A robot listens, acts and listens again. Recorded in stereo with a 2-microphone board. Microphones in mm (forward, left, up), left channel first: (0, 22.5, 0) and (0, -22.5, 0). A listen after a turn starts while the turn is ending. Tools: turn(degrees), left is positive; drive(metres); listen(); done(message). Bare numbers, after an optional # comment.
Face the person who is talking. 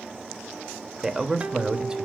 turn(-30)
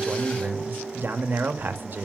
# So it is at 135° right.
turn(-135)
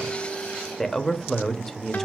done("Found it: a man speaking, straight ahead.")